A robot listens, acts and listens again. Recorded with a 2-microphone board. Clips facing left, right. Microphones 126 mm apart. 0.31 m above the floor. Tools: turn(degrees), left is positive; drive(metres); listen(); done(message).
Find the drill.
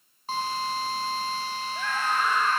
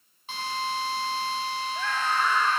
turn(degrees=40)
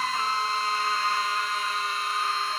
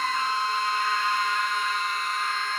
done("Found it: a drill, straight ahead, over 4 m away.")